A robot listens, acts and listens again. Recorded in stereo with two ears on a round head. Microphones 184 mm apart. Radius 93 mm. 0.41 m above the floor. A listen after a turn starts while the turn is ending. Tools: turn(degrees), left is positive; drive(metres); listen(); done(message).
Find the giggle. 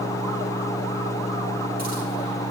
listen()
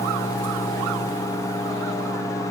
listen()
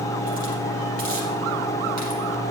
done("I can't make out a giggle.")